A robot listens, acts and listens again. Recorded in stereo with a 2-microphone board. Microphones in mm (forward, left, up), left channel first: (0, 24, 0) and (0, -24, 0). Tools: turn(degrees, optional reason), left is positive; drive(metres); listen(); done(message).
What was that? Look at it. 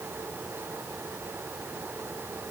listen()
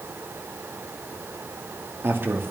turn(degrees=-55, reason="The man speaking: about 55° right or 125° right.")
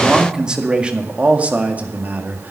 turn(degrees=-40, reason="So it is at 40° right.")
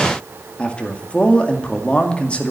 turn(degrees=25, reason="The man speaking is now 25° left.")
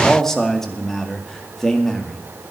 turn(degrees=10, reason="The man speaking is now 10° left.")
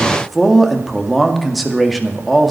done("Found it: a man speaking, straight ahead.")